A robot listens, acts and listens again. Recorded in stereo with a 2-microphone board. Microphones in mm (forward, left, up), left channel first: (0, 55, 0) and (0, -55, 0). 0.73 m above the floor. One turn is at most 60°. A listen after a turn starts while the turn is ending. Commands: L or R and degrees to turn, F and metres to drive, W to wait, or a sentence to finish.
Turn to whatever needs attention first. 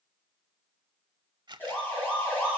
L15
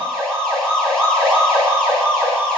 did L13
Facing the siren, over 4 m away.